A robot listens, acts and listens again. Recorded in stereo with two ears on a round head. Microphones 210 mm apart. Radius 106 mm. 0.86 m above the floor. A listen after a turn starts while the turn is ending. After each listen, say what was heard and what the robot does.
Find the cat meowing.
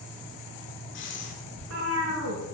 The cat meowing: about 65° right or 115° right. Turn 65° right.
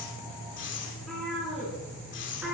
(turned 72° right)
Found it: a cat meowing, straight ahead.